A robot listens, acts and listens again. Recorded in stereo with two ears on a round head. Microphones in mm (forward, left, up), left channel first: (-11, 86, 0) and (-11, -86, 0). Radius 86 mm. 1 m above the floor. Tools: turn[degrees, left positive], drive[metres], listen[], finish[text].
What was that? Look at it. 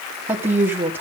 Action: turn[-30]
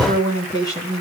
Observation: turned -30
Thought: So it is at 20° left.
Action: turn[20]
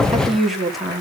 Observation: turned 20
Action: finish[Facing the woman speaking.]